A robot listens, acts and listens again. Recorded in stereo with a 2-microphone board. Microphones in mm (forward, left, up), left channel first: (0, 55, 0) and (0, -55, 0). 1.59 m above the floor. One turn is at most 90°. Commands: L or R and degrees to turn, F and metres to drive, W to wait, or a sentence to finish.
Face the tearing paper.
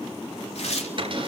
L75
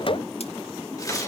W
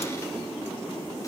W
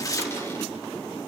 L30
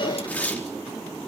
L15
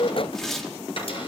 Found it: tearing paper, straight ahead, over 4 m away.